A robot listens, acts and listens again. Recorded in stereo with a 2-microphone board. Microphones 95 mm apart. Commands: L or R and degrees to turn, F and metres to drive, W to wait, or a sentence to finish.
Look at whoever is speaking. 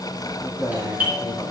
L35
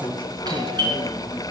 L115
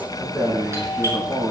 R10
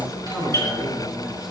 Found it: a man speaking, straight ahead.